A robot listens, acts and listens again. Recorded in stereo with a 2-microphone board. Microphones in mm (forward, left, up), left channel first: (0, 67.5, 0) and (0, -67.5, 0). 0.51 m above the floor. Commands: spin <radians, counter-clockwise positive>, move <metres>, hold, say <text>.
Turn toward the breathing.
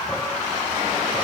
hold
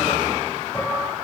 hold
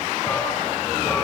say I can't make out breathing, only dishes clattering.